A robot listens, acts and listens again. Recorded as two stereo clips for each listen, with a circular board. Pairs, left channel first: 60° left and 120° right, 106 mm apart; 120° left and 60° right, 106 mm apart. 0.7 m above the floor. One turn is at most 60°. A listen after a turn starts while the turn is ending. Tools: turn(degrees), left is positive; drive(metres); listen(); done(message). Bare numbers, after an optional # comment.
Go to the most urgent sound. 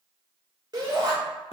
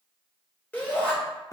# The shout: 165° right.
turn(-60)
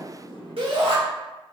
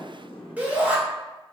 # The shout is now 135° right.
turn(-60)
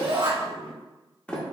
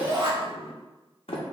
# The shout is now 90° right.
turn(-60)
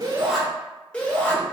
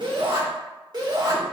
# The shout is now 15° right.
turn(-15)
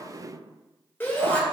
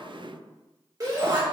# The shout is now 10° right.
turn(-10)
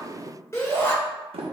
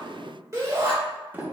drive(1.0)
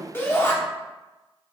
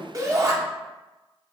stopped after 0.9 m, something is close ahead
done("I am next to the shout.")